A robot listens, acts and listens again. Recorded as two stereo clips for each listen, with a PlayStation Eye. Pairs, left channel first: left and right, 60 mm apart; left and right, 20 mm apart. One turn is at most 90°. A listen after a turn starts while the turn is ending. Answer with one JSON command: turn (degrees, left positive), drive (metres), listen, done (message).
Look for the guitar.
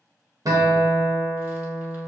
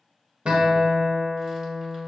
{"turn": -90}
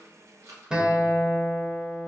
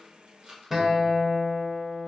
{"turn": -15}
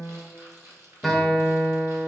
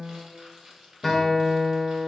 {"done": "Facing the guitar."}